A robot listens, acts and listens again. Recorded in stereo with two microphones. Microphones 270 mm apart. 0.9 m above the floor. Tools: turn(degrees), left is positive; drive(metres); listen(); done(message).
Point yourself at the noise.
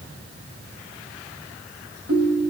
turn(degrees=-60)
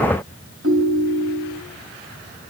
turn(degrees=-60)
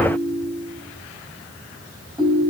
turn(degrees=-15)
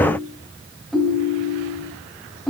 done("Found it: a ringtone, straight ahead.")